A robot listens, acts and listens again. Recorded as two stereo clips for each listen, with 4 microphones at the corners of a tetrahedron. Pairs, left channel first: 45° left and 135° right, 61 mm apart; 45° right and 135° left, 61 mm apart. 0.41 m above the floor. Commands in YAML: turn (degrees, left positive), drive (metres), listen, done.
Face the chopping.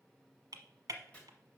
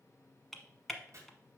turn: 110
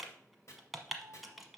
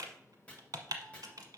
turn: 20
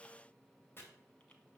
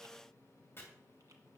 done: "Facing the chopping, 2 to 4 m away."